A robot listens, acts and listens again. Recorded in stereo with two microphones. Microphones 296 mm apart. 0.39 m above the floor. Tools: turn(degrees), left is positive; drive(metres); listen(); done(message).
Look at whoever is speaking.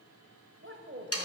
turn(degrees=-40)
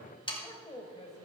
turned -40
turn(degrees=25)
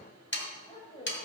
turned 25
turn(degrees=25)
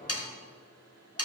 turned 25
listen()
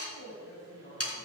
turn(degrees=30)
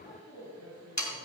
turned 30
done("Found it: a man speaking, straight ahead, 2 to 4 m away.")